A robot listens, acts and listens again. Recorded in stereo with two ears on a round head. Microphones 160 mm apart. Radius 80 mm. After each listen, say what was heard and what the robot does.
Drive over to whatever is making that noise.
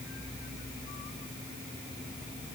Keep listening.
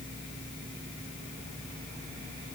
Keep listening.
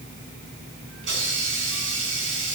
Turn 90° right.
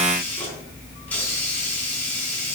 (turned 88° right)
So it is at 10° left. Turn 10° left.
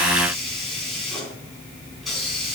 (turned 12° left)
Drive 1.0 m forward.
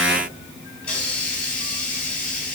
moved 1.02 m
Drive 1.0 m forward.
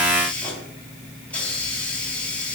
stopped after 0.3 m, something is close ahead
Blocked. The hiss is further on, straight ahead.